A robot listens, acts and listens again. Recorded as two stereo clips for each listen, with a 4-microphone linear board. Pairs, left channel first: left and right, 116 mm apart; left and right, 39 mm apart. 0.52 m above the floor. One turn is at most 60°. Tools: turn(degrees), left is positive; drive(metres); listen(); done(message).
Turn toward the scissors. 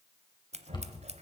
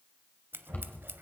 turn(degrees=-60)
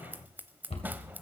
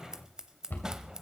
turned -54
turn(degrees=-15)
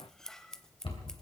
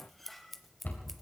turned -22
done("Facing the scissors.")